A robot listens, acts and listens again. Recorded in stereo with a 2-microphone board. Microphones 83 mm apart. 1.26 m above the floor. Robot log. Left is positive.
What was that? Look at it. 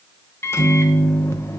note: The microwave: about 30° left or 150° left.
cmd yaw +30
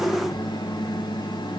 note: So it is at 120° left.
cmd yaw +120
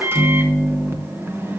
note: The microwave is now 30° right.
cmd yaw -30
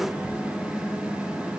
note: The microwave is now 15° right.
cmd yaw -15
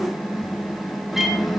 end: Facing the microwave.